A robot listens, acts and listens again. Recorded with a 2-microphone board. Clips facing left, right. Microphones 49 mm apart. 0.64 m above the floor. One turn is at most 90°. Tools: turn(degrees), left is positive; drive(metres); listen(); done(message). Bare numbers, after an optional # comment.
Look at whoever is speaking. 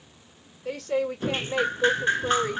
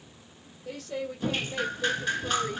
# The woman speaking: about 65° left or 115° left.
turn(65)
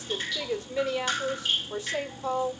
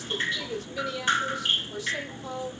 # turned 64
# So it is at 35° left.
turn(35)
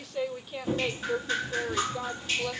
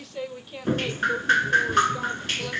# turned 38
done("Found it: a woman speaking, straight ahead, 1 to 2 m away.")